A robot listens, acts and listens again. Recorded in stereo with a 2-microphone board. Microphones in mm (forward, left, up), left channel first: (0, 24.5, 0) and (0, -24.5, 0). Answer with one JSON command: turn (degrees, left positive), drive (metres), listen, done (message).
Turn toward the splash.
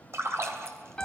{"turn": -60}
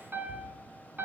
{"listen": true}
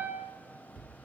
{"done": "I heard a splash, but can't make it out now. It was about straight ahead or 60° right."}